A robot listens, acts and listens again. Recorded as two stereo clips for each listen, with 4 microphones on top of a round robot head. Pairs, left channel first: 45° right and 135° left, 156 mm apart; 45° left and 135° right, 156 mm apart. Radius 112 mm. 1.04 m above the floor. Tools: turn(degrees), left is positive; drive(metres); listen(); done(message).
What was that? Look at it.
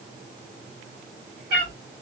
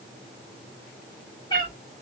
turn(degrees=110)
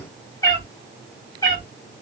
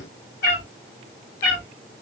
turn(degrees=25)
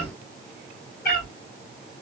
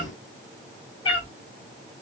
turn(degrees=-15)
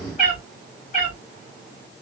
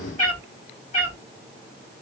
done("Facing the cat meowing.")